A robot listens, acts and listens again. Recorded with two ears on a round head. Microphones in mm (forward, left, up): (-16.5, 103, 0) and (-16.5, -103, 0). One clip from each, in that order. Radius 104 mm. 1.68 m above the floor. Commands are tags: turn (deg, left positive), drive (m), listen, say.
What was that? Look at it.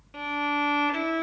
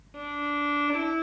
<turn deg="50"/>
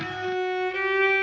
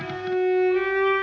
<turn deg="85"/>
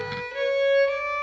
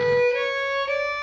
<say>Found it: a violin, straight ahead.</say>